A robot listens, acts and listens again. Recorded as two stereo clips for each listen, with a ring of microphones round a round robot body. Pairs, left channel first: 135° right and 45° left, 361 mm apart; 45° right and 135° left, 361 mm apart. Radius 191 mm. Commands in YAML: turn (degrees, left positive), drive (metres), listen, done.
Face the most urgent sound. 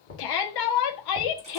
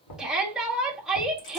turn: -135
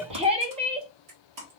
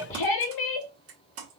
turn: -30
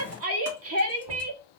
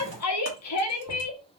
done: "Facing the shout, 1 to 2 m away."